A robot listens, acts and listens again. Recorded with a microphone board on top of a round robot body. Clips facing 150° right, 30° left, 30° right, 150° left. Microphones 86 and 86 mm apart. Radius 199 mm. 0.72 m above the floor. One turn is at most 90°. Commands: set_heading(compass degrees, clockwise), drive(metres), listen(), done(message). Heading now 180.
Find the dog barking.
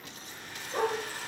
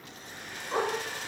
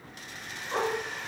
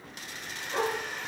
set_heading(170)
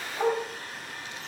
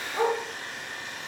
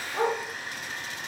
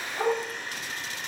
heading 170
done("Facing the dog barking.")